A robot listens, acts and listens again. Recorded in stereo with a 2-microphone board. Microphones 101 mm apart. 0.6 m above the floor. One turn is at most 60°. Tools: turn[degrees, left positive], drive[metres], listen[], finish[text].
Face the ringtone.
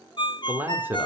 Thought: The ringtone: about 50° left or 130° left.
Action: turn[50]
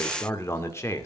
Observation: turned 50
Action: listen[]
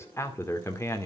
Action: listen[]
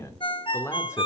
Thought: So it is at 70° left.
Action: turn[60]
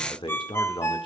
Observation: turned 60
Thought: The ringtone is now 25° left.
Action: turn[25]
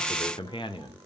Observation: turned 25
Action: listen[]
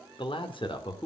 Action: listen[]
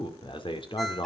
Action: finish[Facing where the ringtone came from. I can't hear it now.]